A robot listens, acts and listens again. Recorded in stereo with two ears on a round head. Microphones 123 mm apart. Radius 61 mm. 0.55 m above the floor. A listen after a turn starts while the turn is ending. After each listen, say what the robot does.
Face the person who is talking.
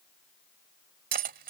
Keep listening.
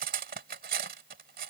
Keep listening.
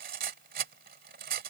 I can't make out anyone speaking to turn to.